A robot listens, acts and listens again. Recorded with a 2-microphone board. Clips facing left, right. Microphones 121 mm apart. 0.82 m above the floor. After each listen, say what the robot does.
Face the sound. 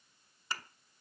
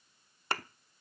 Turn 60° right.
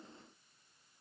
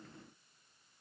Keep listening.
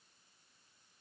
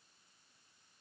I heard a thud, but can't make it out now. It was about straight ahead or 60° right.